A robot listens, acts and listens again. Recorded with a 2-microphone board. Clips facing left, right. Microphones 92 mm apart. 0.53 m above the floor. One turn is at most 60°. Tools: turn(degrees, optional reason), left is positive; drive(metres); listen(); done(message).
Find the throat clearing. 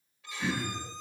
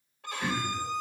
turn(degrees=30)
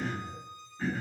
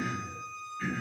turn(degrees=60, reason="So it is at 150° left.")
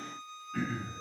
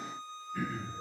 turn(degrees=60, reason="The throat clearing is now 100° left.")
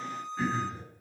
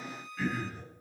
turn(degrees=30, reason="The throat clearing is now 30° left.")
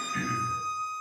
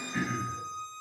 turn(degrees=-20, reason="The throat clearing is now 20° right.")
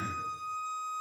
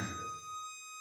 done("Found it: throat clearing, straight ahead.")